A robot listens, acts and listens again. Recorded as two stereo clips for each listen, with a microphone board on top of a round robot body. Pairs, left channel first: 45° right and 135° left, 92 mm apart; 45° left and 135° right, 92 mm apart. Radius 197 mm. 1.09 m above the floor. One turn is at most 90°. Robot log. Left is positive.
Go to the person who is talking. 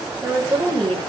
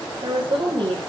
note: The woman speaking: 175° right.
cmd yaw -90
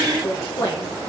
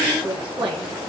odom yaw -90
note: The woman speaking is now 105° right.
cmd yaw -90
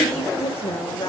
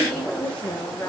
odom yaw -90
note: The woman speaking is now 30° right.
cmd yaw -30
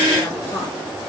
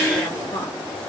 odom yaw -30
cmd idle
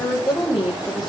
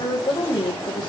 cmd fwd 1.0
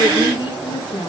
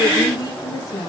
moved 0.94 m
cmd fwd 1.0
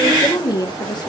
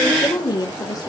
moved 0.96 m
cmd fwd 1.0
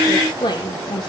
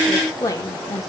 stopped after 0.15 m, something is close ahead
note: The woman speaking is now 10° right.
cmd yaw -10
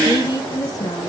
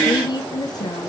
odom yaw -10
end: Arrived at the woman speaking, straight ahead.